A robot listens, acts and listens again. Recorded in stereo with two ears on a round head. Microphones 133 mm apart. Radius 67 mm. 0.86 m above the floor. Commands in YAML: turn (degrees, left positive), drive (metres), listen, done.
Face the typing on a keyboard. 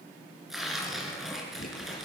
turn: 55
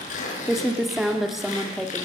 done: "Facing the typing on a keyboard."